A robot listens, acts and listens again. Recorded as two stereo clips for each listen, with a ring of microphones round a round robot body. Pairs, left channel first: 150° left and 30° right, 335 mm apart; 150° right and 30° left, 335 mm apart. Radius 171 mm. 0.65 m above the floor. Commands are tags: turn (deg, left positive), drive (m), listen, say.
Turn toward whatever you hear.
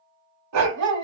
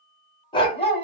<turn deg="-80"/>
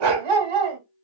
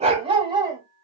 <turn deg="-50"/>
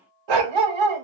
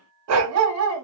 <turn deg="-25"/>
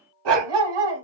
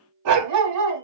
<turn deg="-15"/>
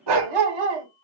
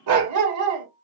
<turn deg="-15"/>
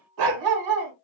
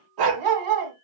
<say>Facing the dog barking, 2 to 4 m away.</say>